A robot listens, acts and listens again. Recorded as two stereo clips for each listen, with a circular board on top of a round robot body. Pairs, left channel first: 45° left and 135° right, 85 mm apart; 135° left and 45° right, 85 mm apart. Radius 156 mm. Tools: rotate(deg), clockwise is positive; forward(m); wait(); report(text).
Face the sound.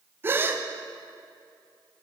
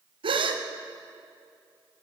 rotate(70)
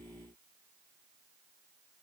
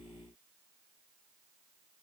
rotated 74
report("Facing where the gasp came from. I can't hear it now.")